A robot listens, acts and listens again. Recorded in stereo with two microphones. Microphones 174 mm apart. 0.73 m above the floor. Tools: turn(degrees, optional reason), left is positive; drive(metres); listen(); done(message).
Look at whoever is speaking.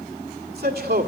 turn(degrees=-70, reason="The man speaking: about 70° right or 110° right.")
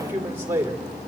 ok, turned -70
turn(degrees=-15, reason="So it is at 15° right.")
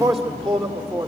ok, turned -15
done("Found it: a man speaking, straight ahead.")